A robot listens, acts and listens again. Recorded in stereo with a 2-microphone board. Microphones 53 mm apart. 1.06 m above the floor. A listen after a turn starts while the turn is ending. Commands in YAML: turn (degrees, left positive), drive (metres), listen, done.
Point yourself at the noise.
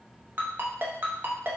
turn: -45
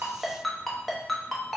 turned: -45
done: "Found it: a ringtone, straight ahead."